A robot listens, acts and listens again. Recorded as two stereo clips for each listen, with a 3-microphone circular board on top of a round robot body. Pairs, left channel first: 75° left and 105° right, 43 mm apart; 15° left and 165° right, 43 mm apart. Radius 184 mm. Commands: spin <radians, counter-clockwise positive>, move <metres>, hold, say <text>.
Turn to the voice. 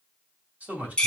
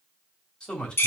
spin -0.96
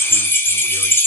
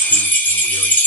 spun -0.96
hold
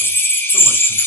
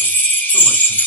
hold
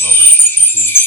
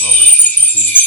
say I heard a man speaking from this way, but can't make it out now.